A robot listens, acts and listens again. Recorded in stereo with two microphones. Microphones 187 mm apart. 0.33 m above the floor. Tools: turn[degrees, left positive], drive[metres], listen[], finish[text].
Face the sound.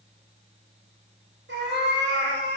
Action: turn[-90]
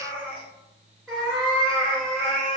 Action: finish[Found it: a cat meowing, straight ahead.]